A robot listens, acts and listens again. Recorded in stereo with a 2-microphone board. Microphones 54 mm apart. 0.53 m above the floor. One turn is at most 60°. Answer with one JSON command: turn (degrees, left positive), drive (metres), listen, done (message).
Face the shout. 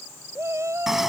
{"turn": -60}
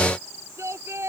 {"turn": -60}
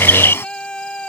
{"turn": 15}
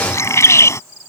{"listen": true}
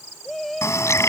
{"done": "Facing the shout."}